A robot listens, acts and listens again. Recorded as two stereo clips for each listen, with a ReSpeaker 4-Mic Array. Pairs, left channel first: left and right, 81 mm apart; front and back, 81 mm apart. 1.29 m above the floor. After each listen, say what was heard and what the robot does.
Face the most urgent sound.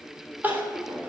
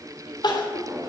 The crying: 25° right. Turn 25° right.
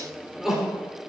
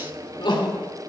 Found it: crying, straight ahead, 2 to 4 m away.